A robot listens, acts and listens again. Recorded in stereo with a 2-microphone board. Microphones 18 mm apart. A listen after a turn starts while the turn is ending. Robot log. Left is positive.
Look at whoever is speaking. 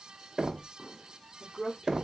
cmd yaw +30
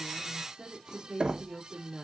note: So it is at 50° right.
cmd yaw -50
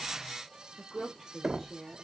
note: The woman speaking is now 20° right.
cmd yaw -20
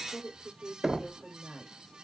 note: The woman speaking is now 10° right.
cmd yaw -10
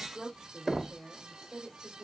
end: Facing the woman speaking.